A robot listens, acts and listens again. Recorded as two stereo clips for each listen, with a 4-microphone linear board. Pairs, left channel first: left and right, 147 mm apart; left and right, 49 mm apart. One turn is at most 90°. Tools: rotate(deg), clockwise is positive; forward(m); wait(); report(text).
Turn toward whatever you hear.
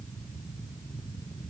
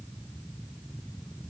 wait()
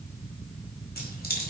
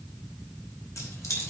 rotate(-90)
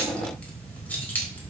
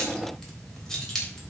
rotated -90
rotate(-10)
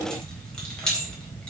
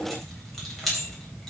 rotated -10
report("Facing the keys jangling, over 4 m away.")